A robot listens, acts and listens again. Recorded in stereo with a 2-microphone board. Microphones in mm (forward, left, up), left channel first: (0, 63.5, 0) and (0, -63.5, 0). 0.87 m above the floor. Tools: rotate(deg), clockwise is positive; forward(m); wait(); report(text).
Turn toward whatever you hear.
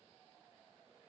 wait()
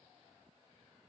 wait()
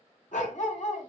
rotate(-75)
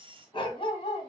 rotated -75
rotate(-45)
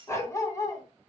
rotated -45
rotate(-25)
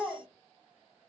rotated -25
report("Facing the dog barking.")